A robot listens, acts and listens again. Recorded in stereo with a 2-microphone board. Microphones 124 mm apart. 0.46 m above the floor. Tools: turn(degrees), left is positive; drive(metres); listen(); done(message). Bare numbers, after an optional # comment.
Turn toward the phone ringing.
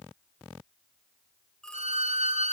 turn(30)
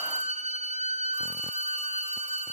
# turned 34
listen()
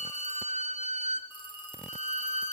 # So it is at 140° left.
turn(140)
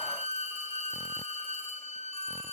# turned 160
# Nothing new. It was at 20° right.
turn(-20)
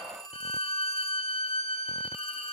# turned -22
done("Facing the phone ringing, 2 to 4 m away.")